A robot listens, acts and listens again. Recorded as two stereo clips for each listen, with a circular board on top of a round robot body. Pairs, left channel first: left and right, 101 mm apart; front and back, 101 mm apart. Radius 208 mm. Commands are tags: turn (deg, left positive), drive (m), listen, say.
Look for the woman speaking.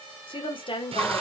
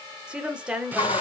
<turn deg="100"/>
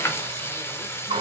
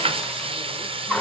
<listen/>
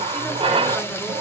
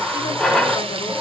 <listen/>
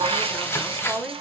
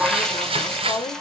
<say>Facing the woman speaking.</say>